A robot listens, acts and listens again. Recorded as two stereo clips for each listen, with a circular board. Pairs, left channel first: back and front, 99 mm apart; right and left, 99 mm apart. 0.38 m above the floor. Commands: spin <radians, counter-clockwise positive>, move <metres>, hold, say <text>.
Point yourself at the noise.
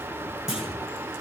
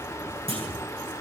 spin 1.48
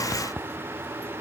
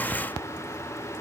say I heard a clunk from this way, but can't make it out now.